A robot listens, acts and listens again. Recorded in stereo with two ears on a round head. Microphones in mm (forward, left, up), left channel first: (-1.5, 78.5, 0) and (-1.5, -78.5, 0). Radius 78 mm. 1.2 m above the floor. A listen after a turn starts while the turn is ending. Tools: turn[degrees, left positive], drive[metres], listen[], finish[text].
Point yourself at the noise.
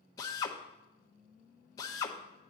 Thought: The drill: about 20° left or 160° left.
Action: turn[20]
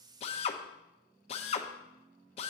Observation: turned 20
Thought: So it is at 135° left.
Action: turn[135]
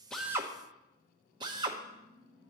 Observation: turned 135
Thought: The drill is now 30° right.
Action: turn[-30]
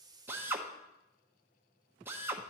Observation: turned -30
Thought: The drill is now 15° right.
Action: turn[-15]
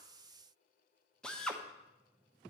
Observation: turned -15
Action: finish[Facing the drill.]